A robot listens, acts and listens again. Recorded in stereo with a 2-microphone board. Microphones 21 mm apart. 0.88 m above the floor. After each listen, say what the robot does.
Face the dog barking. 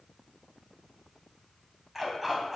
Turn 30° right.
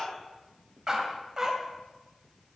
Turn 150° right.
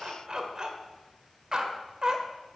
Turn 30° right.
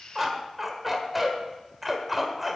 Facing the dog barking.